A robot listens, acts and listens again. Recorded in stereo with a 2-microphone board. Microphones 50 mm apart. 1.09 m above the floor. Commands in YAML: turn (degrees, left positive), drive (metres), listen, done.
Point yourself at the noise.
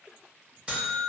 turn: -20
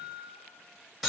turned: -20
done: "Facing the buzzer."